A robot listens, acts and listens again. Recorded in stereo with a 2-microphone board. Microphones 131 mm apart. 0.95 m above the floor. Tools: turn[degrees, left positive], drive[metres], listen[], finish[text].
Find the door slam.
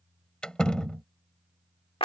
Action: turn[30]
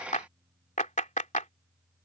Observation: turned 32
Action: listen[]
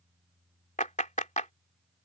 Action: finish[I heard a door slam, but can't make it out now. It was about 25° right or 140° left.]